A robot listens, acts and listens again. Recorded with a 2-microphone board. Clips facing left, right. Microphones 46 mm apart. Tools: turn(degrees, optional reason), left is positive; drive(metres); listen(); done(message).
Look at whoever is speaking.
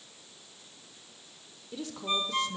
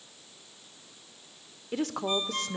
turn(degrees=-65, reason="The woman speaking: about 65° right or 115° right.")
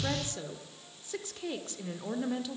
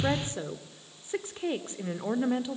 turn(degrees=-30, reason="So it is at 30° right.")
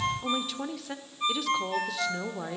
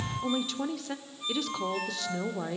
done("Facing the woman speaking.")